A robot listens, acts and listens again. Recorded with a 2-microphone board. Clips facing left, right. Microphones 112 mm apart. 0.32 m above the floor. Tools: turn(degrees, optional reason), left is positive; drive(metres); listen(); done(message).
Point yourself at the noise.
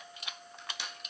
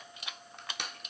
turn(degrees=-60, reason="The crushing: about 60° right or 120° right.")
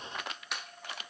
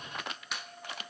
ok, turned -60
done("Found it: crushing, straight ahead.")